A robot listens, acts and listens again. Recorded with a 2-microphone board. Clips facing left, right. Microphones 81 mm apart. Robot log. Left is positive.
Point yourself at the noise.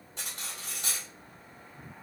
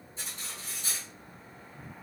note: The cutlery clinking: about 75° left or 105° left.
cmd yaw +75
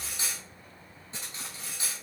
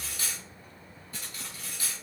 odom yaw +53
note: So it is at 25° left.
cmd yaw +25
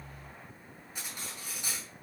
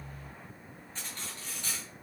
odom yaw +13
note: The cutlery clinking is now 10° left.
cmd yaw +10
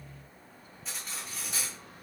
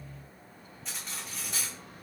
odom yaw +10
end: Facing the cutlery clinking.